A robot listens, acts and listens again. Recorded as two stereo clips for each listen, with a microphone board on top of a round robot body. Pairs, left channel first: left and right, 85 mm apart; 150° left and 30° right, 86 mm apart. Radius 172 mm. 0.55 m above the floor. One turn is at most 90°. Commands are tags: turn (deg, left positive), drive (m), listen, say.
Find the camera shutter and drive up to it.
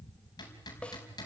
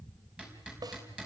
<listen/>
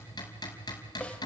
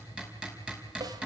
<listen/>
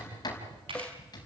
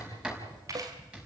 <turn deg="-80"/>
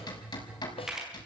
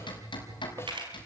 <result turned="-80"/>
<drive m="1.0"/>
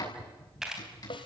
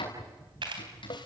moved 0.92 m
<drive m="1.0"/>
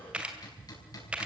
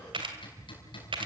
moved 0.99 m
<turn deg="-15"/>
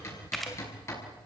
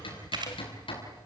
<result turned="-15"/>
<drive m="1.0"/>
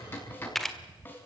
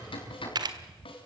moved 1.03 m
<drive m="1.0"/>
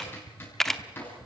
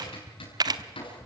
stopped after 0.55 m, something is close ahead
<say>I am next to the camera shutter.</say>